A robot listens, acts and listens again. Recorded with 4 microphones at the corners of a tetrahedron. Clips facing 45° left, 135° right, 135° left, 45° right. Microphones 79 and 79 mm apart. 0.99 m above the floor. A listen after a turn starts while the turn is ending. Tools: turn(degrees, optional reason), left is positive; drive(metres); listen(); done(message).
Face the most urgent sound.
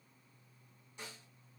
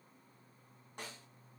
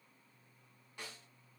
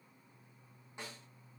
listen()
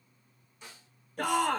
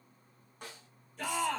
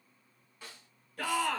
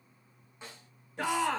turn(degrees=20, reason="The shout: 20° left.")
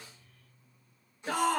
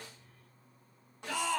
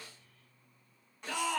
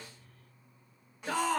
done("Found it: a shout, straight ahead.")